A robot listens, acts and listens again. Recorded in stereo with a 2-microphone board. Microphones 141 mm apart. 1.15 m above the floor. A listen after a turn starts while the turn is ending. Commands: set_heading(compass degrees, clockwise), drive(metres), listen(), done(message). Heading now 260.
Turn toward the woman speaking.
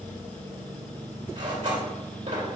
listen()
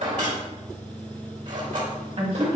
set_heading(305)
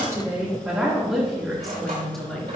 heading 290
done("Facing the woman speaking.")